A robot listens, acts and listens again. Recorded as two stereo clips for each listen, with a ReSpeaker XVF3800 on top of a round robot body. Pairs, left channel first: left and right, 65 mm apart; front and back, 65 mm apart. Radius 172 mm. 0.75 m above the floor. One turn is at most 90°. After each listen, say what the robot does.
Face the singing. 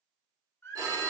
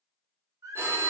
Turn 90° left.
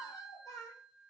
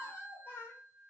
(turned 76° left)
Turn 65° left.
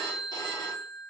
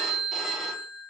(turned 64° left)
Keep listening.
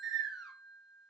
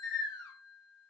Found it: singing, straight ahead.